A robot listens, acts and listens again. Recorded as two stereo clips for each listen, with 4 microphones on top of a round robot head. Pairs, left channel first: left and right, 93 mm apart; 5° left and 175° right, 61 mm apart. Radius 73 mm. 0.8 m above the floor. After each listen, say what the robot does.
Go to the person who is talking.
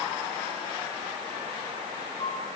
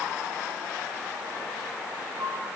Keep listening.
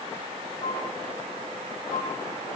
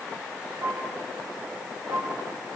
Keep listening.
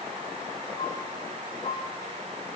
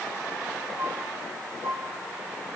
I can't make out anyone speaking, only a flute.